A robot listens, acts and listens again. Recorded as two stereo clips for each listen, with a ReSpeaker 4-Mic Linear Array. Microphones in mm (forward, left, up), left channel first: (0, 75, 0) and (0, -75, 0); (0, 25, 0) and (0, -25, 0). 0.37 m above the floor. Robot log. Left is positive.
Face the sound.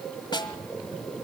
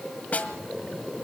note: The snare drum: about 30° left or 150° left.
cmd yaw +30
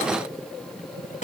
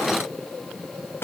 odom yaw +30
note: So it is at 115° left.
cmd yaw +115
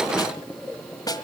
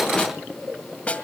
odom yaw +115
note: The snare drum is now 30° left.
cmd yaw +30
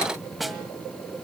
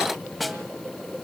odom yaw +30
end: Facing the snare drum.